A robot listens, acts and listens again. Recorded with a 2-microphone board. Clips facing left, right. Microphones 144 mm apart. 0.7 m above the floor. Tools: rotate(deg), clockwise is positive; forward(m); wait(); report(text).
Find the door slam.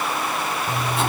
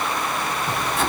wait()
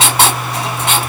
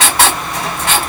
wait()
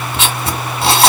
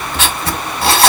report("I can't make out a door slam to turn to.")